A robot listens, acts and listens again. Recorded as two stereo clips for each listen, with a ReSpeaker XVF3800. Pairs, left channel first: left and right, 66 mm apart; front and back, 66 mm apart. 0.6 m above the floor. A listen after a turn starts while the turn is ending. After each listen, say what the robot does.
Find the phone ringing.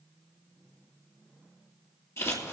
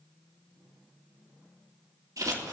Keep listening.
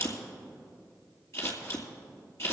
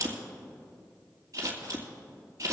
Keep listening.
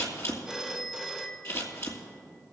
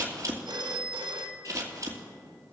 Turn 170° right.
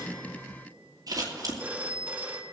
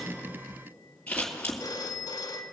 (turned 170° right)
Turn 20° right.
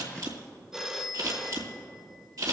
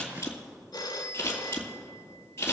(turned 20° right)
Facing the phone ringing.